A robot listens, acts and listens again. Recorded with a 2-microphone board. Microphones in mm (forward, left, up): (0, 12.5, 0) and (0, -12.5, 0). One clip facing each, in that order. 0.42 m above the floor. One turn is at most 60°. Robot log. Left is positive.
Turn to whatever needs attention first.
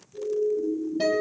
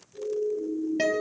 cmd yaw +30
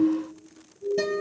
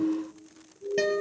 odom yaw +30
note: So it is at 35° right.
cmd yaw -35
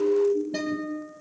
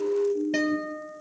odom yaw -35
end: Found it: a siren, straight ahead.